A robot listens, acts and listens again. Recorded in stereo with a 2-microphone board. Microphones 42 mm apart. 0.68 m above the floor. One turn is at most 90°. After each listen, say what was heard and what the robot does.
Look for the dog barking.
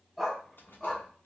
Turn 30° left.
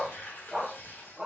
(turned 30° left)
So it is at 10° right. Turn 10° right.
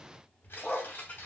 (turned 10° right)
The dog barking is now 15° left. Turn 15° left.
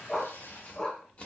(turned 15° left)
The dog barking is now 20° left. Turn 20° left.
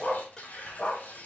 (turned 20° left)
The dog barking is now 30° left. Turn 30° left.
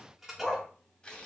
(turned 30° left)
Found it: a dog barking, straight ahead.